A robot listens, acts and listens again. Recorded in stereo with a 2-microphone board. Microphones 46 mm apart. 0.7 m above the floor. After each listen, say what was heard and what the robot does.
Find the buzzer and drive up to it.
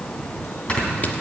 Keep listening.
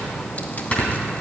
Keep listening.
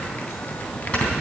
I can't make out a buzzer, only snoring.